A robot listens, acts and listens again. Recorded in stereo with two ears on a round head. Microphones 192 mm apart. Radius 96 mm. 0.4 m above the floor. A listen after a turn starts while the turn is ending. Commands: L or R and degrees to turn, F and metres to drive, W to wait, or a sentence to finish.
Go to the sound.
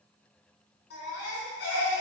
L55
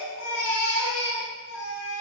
L65
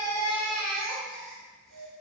F1.0
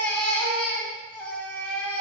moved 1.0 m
F1.0
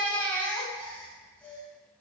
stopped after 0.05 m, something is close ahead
L10
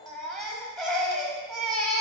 Arrived at the baby crying, straight ahead.